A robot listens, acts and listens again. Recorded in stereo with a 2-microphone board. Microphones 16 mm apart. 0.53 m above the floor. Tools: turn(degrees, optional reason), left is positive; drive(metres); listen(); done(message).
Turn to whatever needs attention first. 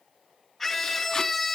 turn(degrees=30)
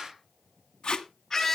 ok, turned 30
turn(degrees=140, reason="So it is at 140° left.")
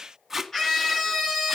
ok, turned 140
turn(degrees=20, reason="The scream is now 20° left.")
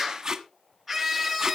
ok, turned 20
done("Facing the scream, over 4 m away.")